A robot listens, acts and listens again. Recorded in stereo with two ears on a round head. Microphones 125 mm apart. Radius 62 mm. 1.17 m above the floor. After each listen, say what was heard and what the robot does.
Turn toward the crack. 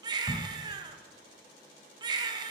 The crack: about 25° left or 155° left. Turn 25° left.
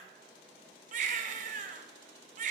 Keep listening.
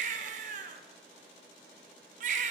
I heard a crack, but can't make it out now. It was about straight ahead or 130° left.